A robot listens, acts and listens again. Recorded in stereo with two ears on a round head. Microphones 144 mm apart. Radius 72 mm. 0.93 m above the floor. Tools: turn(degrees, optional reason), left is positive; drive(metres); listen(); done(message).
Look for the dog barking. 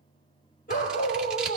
turn(degrees=50, reason="The dog barking: about 50° left or 130° left.")
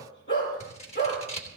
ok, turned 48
turn(degrees=85, reason="So it is at 85° left.")
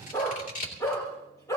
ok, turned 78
turn(degrees=20, reason="The dog barking is now 20° left.")
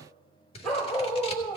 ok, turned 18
done("Found it: a dog barking, straight ahead.")